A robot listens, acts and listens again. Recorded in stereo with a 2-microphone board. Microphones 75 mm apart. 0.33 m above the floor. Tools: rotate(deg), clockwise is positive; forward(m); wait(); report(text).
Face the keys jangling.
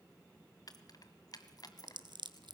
rotate(-60)
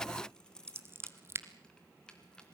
rotate(-10)
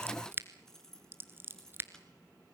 report("Facing the keys jangling, 2 to 4 m away.")